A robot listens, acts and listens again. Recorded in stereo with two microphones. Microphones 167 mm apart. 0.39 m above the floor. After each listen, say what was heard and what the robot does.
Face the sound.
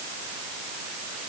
Keep listening.
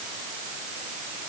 Keep listening.
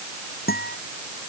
The guitar: about 65° left or 115° left. Turn 65° left.
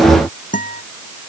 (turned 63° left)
So it is at 50° left. Turn 50° left.
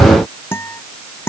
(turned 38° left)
The guitar is now 15° left. Turn 15° left.
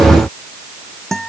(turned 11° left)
Found it: a guitar, straight ahead.